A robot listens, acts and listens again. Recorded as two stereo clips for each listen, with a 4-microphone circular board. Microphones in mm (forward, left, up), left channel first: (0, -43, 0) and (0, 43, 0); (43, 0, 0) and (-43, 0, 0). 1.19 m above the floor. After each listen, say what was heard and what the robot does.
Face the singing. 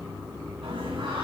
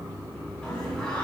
The singing: 80° left. Turn 80° left.
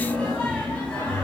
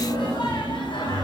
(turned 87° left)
The singing is now 15° right. Turn 15° right.
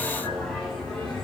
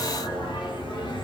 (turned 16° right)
The singing is now 10° right. Turn 10° right.
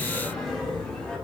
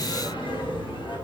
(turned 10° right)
Found it: singing, straight ahead, over 4 m away.